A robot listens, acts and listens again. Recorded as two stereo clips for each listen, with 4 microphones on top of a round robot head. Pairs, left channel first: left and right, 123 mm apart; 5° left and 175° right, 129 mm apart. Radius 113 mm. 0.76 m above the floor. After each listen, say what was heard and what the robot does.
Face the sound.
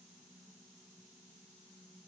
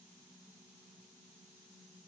Keep listening.
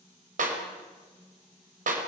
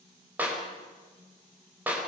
The clap: 95° right. Turn 95° right.
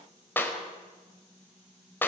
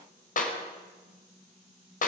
The clap is now 15° left. Turn 15° left.
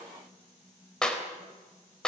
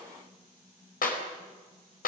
Found it: a clap, straight ahead, over 4 m away.